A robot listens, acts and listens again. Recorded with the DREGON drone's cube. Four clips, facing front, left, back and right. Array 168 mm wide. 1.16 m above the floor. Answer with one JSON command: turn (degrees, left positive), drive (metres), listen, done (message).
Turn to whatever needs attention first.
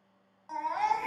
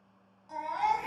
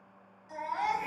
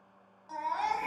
{"turn": -25}
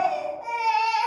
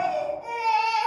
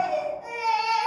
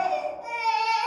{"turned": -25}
{"turn": -15}
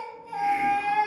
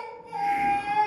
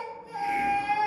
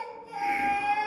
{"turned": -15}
{"done": "Facing the baby crying, under 1 m away."}